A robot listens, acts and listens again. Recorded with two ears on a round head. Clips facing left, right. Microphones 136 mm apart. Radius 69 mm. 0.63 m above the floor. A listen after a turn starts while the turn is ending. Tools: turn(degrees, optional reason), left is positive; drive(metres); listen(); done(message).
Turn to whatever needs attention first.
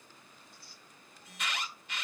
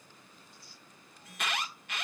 turn(degrees=-45, reason="The alarm: about 45° right or 135° right.")
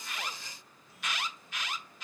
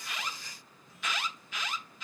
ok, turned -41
turn(degrees=-90, reason="So it is at 90° right.")
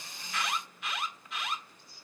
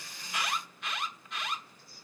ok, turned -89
done("Found it: an alarm, straight ahead.")